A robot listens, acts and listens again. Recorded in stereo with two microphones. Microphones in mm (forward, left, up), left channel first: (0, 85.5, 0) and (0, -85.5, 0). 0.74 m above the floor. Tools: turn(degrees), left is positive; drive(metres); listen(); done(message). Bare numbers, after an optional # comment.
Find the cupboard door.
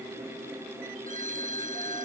listen()
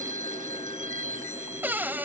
turn(-30)
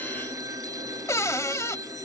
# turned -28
# So it is at 20° left.
turn(20)
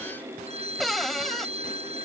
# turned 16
done("Found it: a cupboard door, straight ahead.")